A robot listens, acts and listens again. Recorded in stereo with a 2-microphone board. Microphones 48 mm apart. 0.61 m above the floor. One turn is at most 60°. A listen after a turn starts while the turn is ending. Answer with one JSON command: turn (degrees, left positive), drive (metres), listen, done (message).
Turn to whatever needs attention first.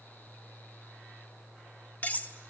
{"listen": true}
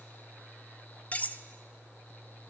{"listen": true}
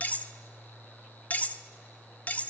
{"done": "I can't make out anything urgent to turn to."}